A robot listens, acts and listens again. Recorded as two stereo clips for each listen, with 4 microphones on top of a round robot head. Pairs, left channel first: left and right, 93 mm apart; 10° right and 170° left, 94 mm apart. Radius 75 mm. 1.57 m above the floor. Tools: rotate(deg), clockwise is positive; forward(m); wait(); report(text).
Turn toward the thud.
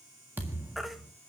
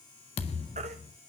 rotate(15)
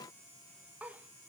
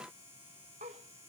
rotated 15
report("I heard a thud from this way, but can't make it out now.")